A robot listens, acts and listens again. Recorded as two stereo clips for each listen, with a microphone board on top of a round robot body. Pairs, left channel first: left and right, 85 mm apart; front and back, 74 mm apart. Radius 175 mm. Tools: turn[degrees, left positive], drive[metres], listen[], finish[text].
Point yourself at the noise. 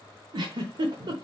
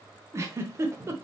Thought: The giggle: 125° right.
Action: turn[-125]
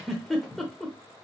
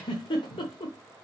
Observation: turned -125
Action: finish[Found it: a giggle, straight ahead.]